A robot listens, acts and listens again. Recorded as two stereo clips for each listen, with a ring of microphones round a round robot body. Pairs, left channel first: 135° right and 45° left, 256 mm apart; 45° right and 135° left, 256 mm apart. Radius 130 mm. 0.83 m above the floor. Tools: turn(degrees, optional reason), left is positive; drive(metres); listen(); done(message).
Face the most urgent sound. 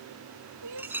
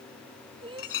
turn(degrees=65, reason="The crying: 65° left.")
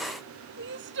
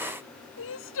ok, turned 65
done("Found it: crying, straight ahead.")